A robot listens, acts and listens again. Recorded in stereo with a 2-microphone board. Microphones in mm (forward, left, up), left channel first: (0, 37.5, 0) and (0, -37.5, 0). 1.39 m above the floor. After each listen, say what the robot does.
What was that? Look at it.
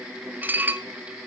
Turn 25° right.
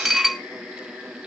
Found it: dishes clattering, straight ahead.